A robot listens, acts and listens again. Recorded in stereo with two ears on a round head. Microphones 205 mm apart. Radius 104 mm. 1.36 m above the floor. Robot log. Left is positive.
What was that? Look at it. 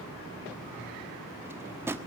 cmd yaw -30
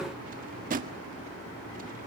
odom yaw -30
note: So it is at 135° right.
cmd yaw -135
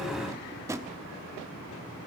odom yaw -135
note: The drawer is now 15° right.
cmd yaw -15
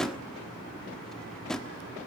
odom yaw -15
end: Facing the drawer.